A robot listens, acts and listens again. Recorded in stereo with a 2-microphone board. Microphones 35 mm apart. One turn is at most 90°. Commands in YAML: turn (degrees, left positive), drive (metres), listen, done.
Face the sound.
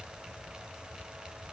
listen: true
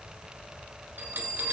turn: -70
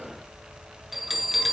done: "Found it: a bell, straight ahead, 2 to 4 m away."